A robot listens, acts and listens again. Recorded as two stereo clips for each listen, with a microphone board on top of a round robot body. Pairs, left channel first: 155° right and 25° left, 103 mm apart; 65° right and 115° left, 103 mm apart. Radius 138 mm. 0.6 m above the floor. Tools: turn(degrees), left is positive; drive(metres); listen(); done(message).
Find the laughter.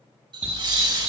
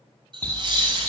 turn(degrees=70)
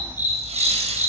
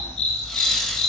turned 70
turn(degrees=20)
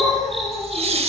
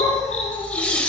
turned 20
turn(degrees=10)
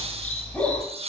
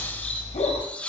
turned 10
turn(degrees=10)
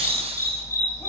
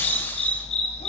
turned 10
listen()
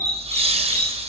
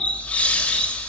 turn(degrees=10)
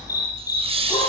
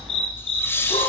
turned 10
done("Found it: laughter, straight ahead, 2 to 4 m away.")